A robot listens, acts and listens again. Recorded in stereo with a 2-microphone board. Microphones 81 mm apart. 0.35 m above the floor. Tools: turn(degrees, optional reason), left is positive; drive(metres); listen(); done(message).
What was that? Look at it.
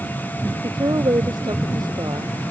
turn(degrees=-55, reason="The woman speaking: about 55° right or 125° right.")
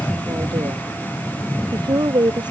turn(degrees=-65, reason="So it is at 65° right.")
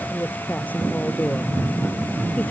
turn(degrees=20, reason="The woman speaking is now 20° left.")
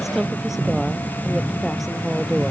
done("Found it: a woman speaking, straight ahead.")